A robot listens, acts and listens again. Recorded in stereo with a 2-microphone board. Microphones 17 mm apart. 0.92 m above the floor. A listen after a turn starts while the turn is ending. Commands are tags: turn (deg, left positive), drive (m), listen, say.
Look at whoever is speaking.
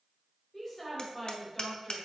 <turn deg="25"/>
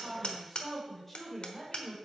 <turn deg="15"/>
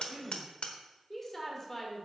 <turn deg="20"/>
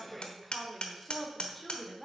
<turn deg="30"/>
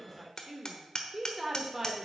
<turn deg="-20"/>
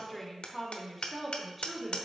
<say>Facing the woman speaking, 2 to 4 m away.</say>